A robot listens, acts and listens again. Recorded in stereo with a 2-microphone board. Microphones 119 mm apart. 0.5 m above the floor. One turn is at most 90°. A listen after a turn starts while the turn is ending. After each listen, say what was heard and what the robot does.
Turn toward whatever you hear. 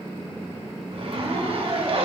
The zipper: about 55° right or 125° right. Turn 55° right.
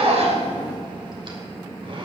So it is at 60° right. Turn 60° right.
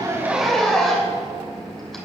Found it: a zipper, straight ahead, 2 to 4 m away.